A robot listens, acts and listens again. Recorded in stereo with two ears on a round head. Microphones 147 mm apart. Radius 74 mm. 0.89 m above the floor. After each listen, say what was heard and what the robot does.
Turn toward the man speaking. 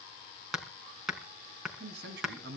The man speaking: about 75° right or 105° right. Turn 75° right.
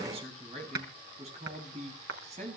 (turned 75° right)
So it is at 45° right. Turn 45° right.
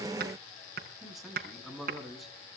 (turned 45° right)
Facing the man speaking, over 4 m away.